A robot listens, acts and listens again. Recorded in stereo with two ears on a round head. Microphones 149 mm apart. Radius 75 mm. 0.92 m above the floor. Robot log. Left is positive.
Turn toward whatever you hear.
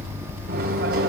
note: The microwave: about 65° right or 115° right.
cmd yaw -65
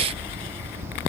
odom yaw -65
cmd idle
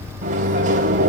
note: So it is at 45° right.
cmd yaw -45
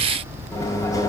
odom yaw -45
note: The microwave is now 20° left.
cmd yaw +20
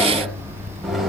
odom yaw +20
end: Found it: a microwave, straight ahead.